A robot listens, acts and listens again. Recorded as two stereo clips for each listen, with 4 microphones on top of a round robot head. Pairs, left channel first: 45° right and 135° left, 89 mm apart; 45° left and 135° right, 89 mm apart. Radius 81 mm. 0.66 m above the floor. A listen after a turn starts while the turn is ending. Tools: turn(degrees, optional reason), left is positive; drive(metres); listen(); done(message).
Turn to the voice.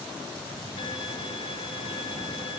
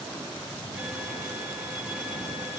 listen()
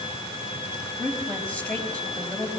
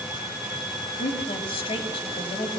turn(degrees=30, reason="The woman speaking: 30° left.")
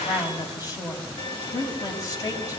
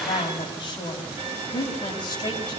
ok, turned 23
done("Found it: a woman speaking, straight ahead.")